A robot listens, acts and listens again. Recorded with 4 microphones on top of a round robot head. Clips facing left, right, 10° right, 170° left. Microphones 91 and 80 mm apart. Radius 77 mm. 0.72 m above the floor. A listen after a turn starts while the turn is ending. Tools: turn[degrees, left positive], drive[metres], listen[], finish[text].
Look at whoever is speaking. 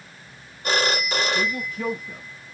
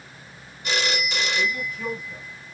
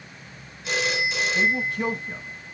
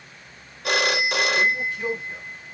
Thought: The man speaking: 35° left.
Action: turn[35]
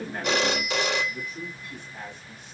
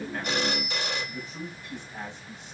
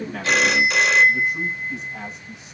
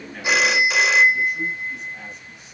Thought: The man speaking is now 20° right.
Action: turn[-20]
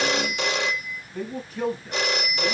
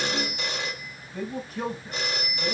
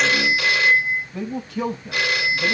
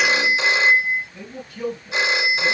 Action: finish[Found it: a man speaking, straight ahead.]